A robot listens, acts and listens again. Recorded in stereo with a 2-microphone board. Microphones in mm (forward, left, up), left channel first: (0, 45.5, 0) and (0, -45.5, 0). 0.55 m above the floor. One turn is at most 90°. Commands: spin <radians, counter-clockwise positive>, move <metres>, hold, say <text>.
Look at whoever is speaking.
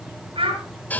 spin -1.57
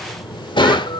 hold
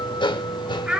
spin -0.17
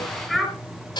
say Found it: a child speaking, straight ahead.